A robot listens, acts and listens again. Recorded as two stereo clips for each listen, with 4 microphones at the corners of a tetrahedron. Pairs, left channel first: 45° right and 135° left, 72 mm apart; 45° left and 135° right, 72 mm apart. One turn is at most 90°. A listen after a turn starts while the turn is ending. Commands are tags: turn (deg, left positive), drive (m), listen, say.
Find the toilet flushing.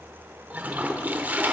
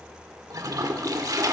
<turn deg="-90"/>
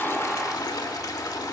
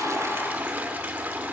<turn deg="-75"/>
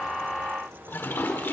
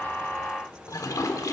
<turn deg="15"/>
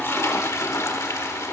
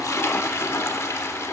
<say>Found it: a toilet flushing, straight ahead, 1 to 2 m away.</say>